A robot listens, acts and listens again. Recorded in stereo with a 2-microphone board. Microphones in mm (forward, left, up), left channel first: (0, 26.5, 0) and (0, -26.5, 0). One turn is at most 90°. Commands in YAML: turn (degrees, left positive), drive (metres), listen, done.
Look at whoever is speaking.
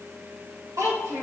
turn: -90
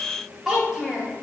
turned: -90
done: "Facing the child speaking."